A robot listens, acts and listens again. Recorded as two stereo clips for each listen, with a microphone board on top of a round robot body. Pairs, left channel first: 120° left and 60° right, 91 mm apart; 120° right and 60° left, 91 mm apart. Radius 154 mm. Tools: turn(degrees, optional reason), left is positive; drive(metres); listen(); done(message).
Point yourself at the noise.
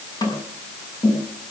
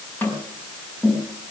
turn(degrees=165, reason="The tapping: 165° left.")
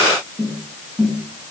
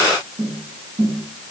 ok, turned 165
turn(degrees=50, reason="The tapping is now 50° left.")
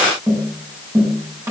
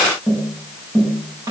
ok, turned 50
done("Found it: tapping, straight ahead.")